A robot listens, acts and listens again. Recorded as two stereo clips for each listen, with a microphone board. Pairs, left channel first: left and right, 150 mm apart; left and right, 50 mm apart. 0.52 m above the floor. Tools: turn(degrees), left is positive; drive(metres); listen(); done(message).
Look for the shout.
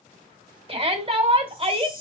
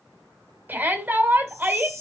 turn(degrees=-40)
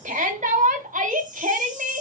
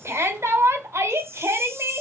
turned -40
turn(degrees=-90)
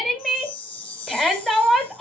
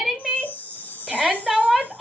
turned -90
done("Found it: a shout, straight ahead, 1 to 2 m away.")